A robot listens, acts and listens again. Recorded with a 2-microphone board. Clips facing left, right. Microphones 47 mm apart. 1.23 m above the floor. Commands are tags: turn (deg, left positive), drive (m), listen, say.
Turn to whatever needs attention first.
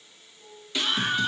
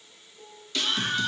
<turn deg="20"/>
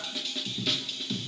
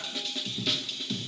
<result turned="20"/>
<say>Found it: a scream, straight ahead.</say>